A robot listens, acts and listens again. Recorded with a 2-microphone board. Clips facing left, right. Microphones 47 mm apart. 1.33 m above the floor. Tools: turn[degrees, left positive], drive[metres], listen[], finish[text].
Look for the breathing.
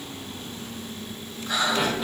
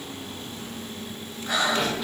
Thought: The breathing: about 55° right or 125° right.
Action: turn[-55]
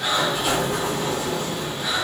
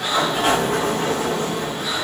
Action: finish[Facing the breathing, over 4 m away.]